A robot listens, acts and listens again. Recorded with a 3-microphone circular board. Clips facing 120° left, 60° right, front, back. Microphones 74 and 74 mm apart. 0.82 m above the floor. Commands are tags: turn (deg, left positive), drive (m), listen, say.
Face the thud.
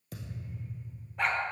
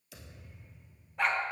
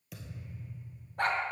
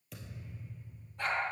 <turn deg="85"/>
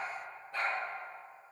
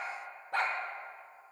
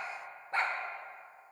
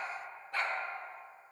<say>I heard a thud from this way, but can't make it out now.</say>